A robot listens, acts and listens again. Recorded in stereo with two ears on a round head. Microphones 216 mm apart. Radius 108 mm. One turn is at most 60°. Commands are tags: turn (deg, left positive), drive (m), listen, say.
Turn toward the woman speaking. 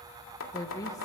<turn deg="15"/>
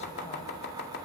<listen/>
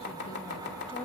<listen/>
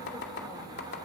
<say>I heard a woman speaking, but can't make it out now. It was about straight ahead or 150° left.</say>